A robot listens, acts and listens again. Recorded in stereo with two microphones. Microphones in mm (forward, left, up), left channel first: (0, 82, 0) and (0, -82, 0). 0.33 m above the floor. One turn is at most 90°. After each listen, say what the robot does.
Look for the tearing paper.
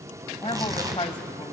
Turn 20° right.
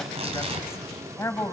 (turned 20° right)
Turn 90° right.
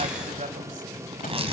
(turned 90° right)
Turn 45° right.
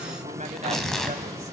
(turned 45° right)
Facing the tearing paper.